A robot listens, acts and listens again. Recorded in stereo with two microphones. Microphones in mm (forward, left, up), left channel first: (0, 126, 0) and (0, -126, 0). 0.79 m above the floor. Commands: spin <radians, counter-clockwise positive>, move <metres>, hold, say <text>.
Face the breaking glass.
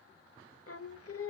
hold
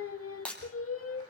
spin 0.52
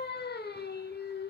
hold
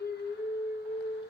say I heard breaking glass, but can't make it out now. It was about 25° right or 145° left.